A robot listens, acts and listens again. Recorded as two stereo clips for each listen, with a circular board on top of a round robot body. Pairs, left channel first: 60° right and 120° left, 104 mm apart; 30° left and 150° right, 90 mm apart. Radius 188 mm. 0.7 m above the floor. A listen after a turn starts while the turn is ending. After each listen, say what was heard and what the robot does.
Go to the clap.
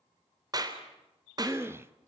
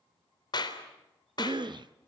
The clap: 70° left. Turn 70° left.
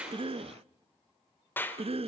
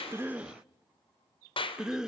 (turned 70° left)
The clap is now 10° left. Turn 10° left.
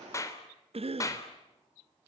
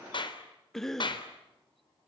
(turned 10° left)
Drive 1.0 m forward.
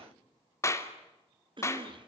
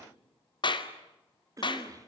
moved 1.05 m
Drive 1.0 m forward.
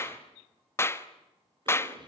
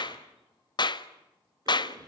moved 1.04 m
Drive 1.0 m forward.
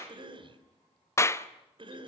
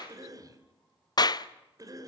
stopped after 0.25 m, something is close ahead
Arrived at the clap, straight ahead.